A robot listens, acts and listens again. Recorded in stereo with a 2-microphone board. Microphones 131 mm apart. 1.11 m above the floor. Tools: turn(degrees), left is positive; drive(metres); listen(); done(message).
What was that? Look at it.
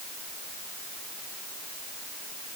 listen()
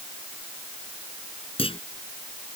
turn(degrees=45)
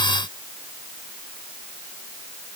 listen()
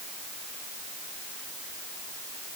done("I heard a clunk, but can't make it out now. It was about straight ahead or 90° left.")